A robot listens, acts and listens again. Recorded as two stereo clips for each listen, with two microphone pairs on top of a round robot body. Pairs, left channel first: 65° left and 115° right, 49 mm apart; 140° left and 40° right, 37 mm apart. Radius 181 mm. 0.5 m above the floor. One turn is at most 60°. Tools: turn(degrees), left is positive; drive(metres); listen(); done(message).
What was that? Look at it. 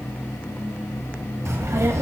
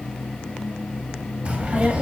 turn(degrees=-60)
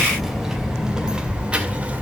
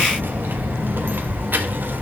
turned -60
turn(degrees=-55)
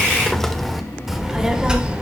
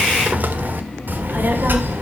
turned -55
turn(degrees=-45)
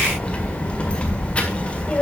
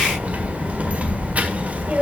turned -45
done("Found it: a child speaking, straight ahead.")